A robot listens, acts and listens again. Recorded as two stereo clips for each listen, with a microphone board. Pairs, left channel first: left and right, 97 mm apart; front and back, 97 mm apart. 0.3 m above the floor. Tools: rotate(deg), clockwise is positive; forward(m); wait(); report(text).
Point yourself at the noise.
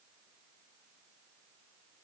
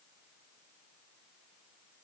wait()
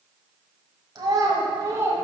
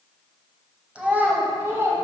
rotate(135)
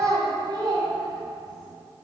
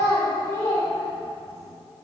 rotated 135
rotate(60)
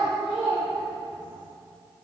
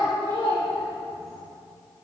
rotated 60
rotate(15)
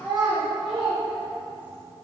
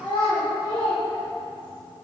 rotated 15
report("Facing the child speaking, 2 to 4 m away.")